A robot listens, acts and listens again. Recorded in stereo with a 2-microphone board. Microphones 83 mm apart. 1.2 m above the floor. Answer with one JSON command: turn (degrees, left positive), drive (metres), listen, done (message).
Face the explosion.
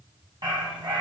{"listen": true}
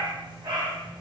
{"listen": true}
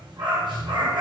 {"done": "I can't make out an explosion, only a dog barking."}